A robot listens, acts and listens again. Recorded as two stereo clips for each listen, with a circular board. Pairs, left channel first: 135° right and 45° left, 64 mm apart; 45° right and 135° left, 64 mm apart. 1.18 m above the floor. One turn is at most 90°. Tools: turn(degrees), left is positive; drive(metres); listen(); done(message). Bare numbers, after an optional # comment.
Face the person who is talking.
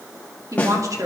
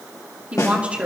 # The woman speaking: 65° left.
turn(65)
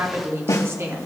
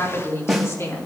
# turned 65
done("Found it: a woman speaking, straight ahead, 2 to 4 m away.")